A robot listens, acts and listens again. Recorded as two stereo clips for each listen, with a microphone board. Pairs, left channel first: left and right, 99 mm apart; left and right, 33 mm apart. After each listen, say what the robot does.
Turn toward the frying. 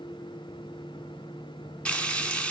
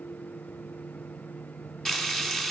Turn 30° left.
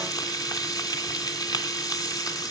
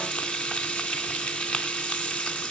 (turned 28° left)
Turn 140° left.
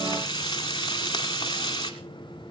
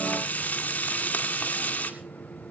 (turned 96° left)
Turn 45° left.
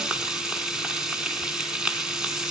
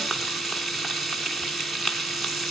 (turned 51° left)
Found it: frying, straight ahead, 2 to 4 m away.